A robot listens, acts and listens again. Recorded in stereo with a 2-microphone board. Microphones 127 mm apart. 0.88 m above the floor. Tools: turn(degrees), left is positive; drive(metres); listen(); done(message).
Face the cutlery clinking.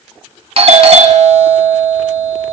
listen()
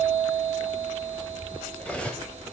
turn(degrees=30)
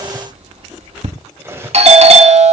turn(degrees=-20)
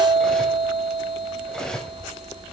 done("Facing the cutlery clinking.")